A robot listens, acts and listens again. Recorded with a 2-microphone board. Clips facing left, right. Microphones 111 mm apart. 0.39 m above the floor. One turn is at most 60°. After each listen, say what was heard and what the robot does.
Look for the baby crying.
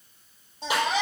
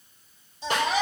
The baby crying: about 55° left or 125° left. Turn 55° left.
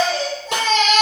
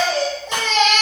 Facing the baby crying.